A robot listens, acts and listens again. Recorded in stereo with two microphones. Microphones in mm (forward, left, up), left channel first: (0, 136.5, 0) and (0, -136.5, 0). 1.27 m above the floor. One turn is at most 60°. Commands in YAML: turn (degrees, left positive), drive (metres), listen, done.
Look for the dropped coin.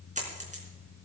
turn: -25
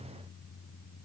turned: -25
listen: true
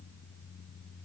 done: "I heard a dropped coin, but can't make it out now. It was about straight ahead or 130° right."